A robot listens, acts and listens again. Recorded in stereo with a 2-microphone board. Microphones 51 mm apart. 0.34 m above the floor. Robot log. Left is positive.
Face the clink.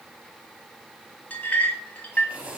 note: The clink: about 30° left or 150° left.
cmd yaw +30
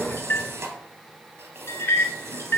note: So it is at 120° left.
cmd yaw +120
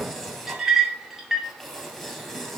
note: The clink is now 10° right.
cmd yaw -10
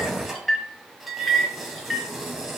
end: Facing the clink, 1 to 2 m away.